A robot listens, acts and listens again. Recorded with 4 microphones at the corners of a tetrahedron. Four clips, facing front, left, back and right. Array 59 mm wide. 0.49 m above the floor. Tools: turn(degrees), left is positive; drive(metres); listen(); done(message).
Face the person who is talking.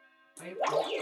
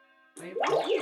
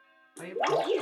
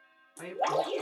turn(degrees=-145)
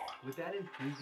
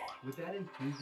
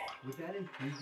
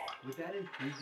turn(degrees=-15)
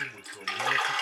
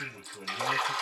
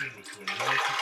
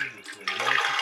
listen()
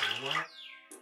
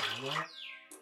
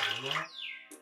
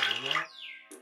listen()
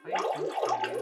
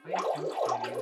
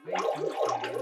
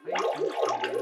done("Facing where the man speaking came from. I can't hear it now.")